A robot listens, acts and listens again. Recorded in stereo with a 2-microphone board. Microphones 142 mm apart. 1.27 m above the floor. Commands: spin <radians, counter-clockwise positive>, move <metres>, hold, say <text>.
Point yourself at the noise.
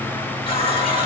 spin 0.70
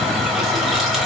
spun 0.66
say Found it: a running tap, straight ahead, 1 to 2 m away.